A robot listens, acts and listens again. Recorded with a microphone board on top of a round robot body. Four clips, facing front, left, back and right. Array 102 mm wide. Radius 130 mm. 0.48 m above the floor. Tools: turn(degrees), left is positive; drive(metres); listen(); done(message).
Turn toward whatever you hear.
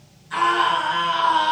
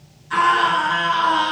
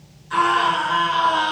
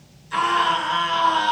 turn(degrees=115)
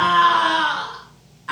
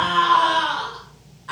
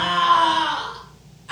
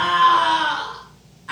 done("Facing the scream.")